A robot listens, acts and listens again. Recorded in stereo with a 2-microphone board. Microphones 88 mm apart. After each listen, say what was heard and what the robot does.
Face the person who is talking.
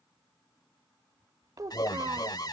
The child speaking: about 45° right or 135° right. Turn 45° right.
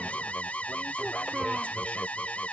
Keep listening.
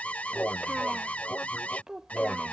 So it is at 10° right. Turn 10° right.
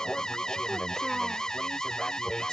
Keep listening.
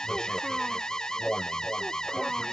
Keep listening.
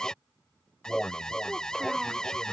Facing where the child speaking came from. I can't hear it now.